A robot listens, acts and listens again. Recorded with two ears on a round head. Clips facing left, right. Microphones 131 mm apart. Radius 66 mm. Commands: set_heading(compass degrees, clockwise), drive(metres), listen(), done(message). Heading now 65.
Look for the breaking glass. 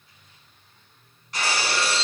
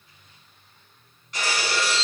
set_heading(30)
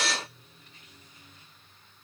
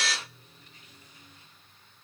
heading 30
set_heading(280)
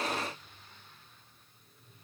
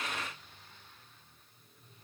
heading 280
done("I heard breaking glass from this way, but can't make it out now.")